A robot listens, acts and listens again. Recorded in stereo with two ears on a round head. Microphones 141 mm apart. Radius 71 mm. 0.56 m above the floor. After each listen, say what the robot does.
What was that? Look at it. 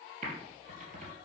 Turn 50° right.
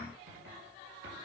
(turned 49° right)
Turn 85° right.
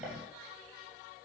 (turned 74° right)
Turn 10° right.
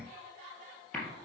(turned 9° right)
Found it: typing on a keyboard, straight ahead, 2 to 4 m away.